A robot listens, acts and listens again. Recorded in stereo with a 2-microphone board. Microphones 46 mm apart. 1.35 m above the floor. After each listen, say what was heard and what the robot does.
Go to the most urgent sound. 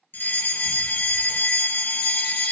The fire alarm: about 50° left or 130° left. Turn 50° left.
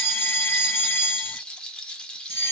So it is at 80° left. Turn 80° left.
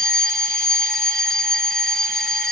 The fire alarm is now 15° left. Turn 15° left.
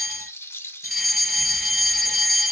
Drive 1.0 m forward.
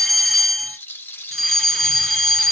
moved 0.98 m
Drive 1.0 m forward.
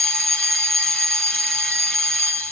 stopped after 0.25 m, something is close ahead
I am next to the fire alarm.